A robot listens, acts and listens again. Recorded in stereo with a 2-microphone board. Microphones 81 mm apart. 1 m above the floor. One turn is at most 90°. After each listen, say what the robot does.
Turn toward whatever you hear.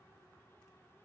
Keep listening.
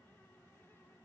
Keep listening.
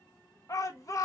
Turn 45° left.
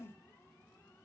Keep listening.
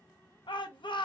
Turn 90° left.
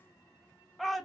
Found it: a shout, straight ahead, under 1 m away.